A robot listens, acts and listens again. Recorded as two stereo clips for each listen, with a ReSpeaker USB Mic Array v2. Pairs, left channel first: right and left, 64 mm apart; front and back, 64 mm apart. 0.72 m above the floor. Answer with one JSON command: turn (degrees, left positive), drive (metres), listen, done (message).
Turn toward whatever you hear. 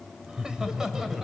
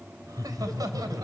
{"turn": 170}
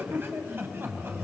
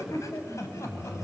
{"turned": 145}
{"turn": 40}
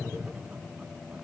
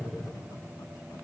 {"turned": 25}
{"turn": 15}
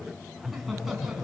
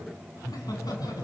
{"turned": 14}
{"done": "Facing the laughter."}